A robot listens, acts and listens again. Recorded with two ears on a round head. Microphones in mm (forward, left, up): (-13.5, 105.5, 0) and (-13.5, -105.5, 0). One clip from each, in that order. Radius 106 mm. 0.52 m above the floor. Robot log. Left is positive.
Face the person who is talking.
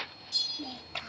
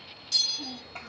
note: The child speaking: about 60° left or 120° left.
cmd yaw +60
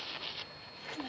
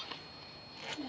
note: So it is at 10° left.
cmd yaw +10
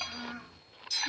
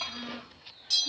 end: Found it: a child speaking, straight ahead, 1 to 2 m away.